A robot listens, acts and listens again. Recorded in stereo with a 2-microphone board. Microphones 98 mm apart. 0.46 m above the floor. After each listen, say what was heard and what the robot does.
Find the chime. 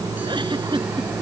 Keep listening.
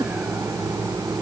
Keep listening.
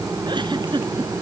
I can't make out a chime to turn to.